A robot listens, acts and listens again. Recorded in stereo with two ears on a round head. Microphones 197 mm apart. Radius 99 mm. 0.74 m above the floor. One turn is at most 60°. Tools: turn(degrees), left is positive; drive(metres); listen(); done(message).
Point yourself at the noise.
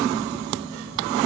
listen()
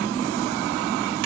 listen()
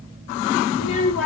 turn(degrees=60)
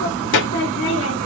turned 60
turn(degrees=60)
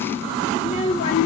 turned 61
turn(degrees=35)
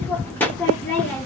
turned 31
turn(degrees=10)
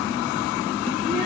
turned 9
listen()
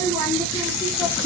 done("Found it: a child speaking, straight ahead.")